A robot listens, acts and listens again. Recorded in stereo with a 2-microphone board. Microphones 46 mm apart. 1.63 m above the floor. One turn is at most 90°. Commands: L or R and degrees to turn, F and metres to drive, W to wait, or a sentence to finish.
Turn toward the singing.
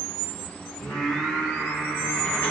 L65
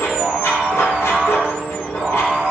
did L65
R20
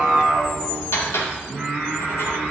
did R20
R10
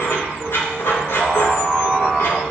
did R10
Facing the singing.